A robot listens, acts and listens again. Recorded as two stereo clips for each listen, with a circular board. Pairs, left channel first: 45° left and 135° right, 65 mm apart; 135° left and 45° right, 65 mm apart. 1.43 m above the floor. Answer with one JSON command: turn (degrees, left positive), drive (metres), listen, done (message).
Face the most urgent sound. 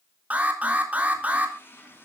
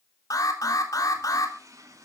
{"turn": 160}
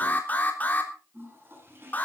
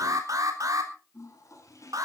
{"turn": -20}
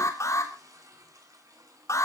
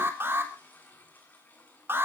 {"done": "Facing the alarm."}